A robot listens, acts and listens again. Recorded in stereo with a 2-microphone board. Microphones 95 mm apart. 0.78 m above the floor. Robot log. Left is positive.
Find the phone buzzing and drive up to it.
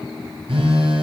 note: The phone buzzing: about 70° right or 110° right.
cmd yaw -70
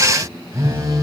note: So it is at 35° right.
cmd yaw -35
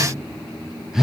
cmd fwd 1.0
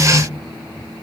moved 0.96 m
cmd idle
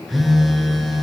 cmd fwd 1.0
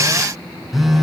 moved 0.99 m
cmd fwd 1.0
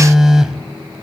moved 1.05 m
cmd fwd 1.0
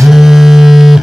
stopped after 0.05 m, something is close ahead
end: I am next to the phone buzzing.